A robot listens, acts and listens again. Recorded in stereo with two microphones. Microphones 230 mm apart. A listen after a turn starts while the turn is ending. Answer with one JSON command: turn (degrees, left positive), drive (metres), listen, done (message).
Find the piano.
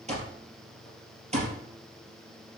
{"listen": true}
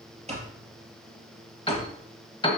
{"turn": 25}
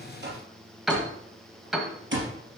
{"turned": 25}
{"done": "Found it: a piano, straight ahead."}